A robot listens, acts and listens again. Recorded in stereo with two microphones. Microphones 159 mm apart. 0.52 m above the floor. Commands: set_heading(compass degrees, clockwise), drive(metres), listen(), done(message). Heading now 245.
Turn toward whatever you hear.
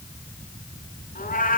set_heading(185)
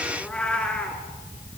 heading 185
done("Found it: a cat meowing, straight ahead, 2 to 4 m away.")